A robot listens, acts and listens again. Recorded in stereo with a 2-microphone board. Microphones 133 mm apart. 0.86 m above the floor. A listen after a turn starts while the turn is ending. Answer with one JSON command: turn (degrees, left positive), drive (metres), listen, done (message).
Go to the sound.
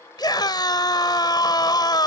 {"turn": 30}
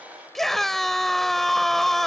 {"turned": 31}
{"drive": 1.0}
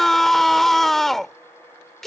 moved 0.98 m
{"drive": 1.0}
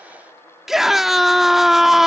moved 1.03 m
{"drive": 1.0}
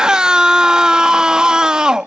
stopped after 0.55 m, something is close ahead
{"done": "I am next to the scream."}